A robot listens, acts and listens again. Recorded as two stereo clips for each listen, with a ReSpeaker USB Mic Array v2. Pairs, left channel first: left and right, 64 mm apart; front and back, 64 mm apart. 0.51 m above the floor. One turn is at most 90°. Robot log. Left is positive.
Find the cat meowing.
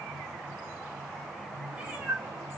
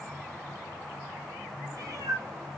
note: The cat meowing: 150° right.
cmd yaw -90
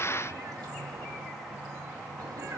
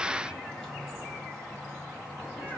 note: The cat meowing is now 70° right.
cmd yaw -70
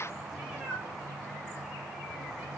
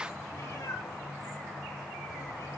note: The cat meowing is now 15° right.
cmd yaw -15
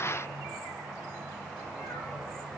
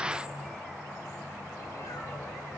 cmd idle
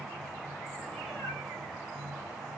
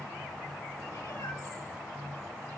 cmd idle
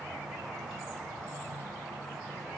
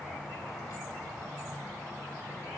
end: I heard a cat meowing from this way, but can't make it out now.